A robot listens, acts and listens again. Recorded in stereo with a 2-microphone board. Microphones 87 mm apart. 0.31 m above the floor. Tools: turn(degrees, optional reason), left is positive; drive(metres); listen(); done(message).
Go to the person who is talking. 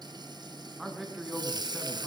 turn(degrees=30)
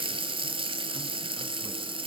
listen()
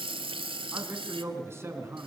turn(degrees=-30, reason="So it is at 30° right.")
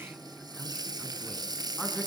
drive(metres=1.0)
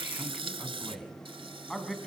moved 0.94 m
drive(metres=1.0)
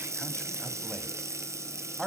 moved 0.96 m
drive(metres=1.0)
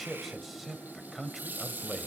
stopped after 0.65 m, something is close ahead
done("I am next to the man speaking.")